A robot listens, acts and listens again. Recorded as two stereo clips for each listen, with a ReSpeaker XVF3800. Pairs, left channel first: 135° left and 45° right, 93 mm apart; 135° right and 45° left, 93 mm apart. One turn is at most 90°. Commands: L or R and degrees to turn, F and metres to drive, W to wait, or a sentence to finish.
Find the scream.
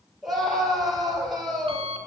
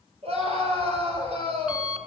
L40
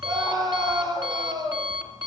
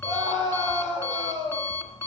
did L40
Found it: a scream, straight ahead, over 4 m away.